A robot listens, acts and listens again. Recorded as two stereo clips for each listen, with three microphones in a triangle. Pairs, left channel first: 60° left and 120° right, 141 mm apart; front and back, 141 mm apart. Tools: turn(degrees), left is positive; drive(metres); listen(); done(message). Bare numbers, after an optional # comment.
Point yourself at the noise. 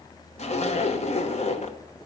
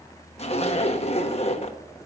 # The zipper: 35° left.
turn(35)
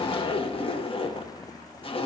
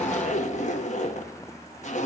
# The zipper is now 15° left.
turn(15)
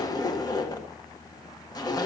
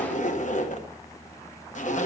done("Found it: a zipper, straight ahead.")